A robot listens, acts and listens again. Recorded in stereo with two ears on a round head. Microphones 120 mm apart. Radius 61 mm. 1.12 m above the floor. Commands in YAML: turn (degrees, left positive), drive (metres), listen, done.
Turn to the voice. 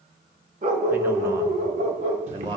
turn: -30
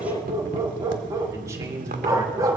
turn: -25
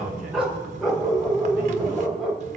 listen: true
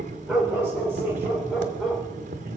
listen: true
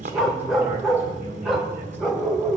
done: "I heard a man speaking, but can't make it out now. It was about straight ahead or 130° right."